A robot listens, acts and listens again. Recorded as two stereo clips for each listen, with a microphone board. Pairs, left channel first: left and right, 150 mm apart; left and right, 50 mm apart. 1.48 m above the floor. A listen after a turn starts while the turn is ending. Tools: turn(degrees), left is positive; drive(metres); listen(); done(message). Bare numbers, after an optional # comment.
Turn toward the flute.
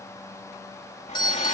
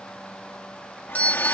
listen()
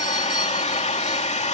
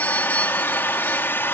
listen()
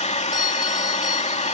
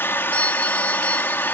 done("I can't make out a flute, only a hair dryer and a doorbell.")